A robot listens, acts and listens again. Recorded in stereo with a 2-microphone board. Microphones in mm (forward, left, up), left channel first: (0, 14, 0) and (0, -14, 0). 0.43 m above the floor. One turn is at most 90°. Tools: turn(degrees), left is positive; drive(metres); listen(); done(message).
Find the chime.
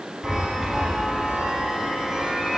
turn(degrees=-15)
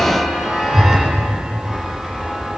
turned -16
done("Found it: a chime, straight ahead, 2 to 4 m away.")